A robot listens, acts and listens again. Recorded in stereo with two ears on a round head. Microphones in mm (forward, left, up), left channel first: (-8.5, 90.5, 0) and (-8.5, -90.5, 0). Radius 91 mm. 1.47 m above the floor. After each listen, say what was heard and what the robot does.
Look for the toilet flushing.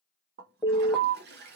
The toilet flushing: about 55° right or 125° right. Turn 55° right.
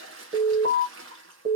So it is at 70° right. Turn 70° right.
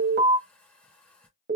Facing the toilet flushing.